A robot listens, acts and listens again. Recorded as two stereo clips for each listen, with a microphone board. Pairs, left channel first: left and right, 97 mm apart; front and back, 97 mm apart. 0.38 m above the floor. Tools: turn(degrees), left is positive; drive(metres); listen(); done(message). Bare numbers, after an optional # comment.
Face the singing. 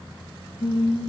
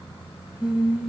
# The singing: 105° left.
turn(105)
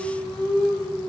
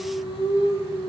# The singing is now 10° left.
turn(10)
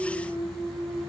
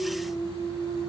done("Facing the singing.")